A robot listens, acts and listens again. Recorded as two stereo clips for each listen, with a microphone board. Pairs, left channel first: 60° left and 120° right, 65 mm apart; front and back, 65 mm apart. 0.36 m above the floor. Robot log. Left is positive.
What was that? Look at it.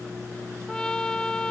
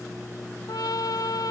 note: The trumpet: 15° right.
cmd yaw -15
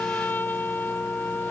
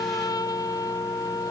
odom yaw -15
end: Facing the trumpet.